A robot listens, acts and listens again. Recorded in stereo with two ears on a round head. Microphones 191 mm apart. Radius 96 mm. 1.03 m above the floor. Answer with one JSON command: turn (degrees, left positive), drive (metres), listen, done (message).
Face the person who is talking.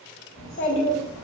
{"turn": 65}
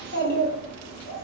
{"turn": 45}
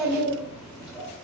{"done": "Found it: a child speaking, straight ahead."}